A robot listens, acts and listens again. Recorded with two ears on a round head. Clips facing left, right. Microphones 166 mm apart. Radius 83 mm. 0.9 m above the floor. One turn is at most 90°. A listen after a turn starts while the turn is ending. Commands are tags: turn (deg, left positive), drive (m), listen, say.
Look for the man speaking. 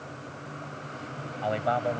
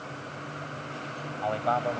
<turn deg="20"/>
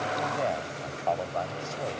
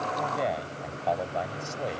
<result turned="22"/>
<turn deg="-10"/>
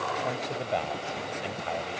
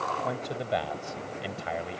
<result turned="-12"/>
<turn deg="-15"/>
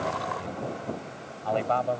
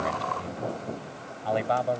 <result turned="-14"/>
<turn deg="-10"/>
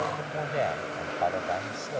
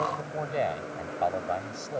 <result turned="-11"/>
<say>Facing the man speaking.</say>